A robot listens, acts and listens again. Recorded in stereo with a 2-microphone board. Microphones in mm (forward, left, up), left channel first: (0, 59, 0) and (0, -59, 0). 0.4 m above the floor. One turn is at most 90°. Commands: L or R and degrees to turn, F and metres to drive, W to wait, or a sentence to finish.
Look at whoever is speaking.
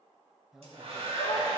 R30
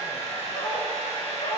W
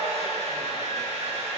W
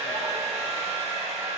I heard a man speaking, but can't make it out now. It was about 25° left or 145° right.